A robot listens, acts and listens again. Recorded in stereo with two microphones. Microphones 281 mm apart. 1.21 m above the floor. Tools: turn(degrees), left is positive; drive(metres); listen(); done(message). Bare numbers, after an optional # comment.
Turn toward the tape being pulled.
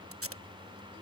# The tape being pulled: about 50° right or 130° right.
turn(-50)
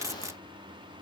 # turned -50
# So it is at 10° right.
turn(-10)
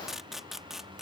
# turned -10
done("Facing the tape being pulled.")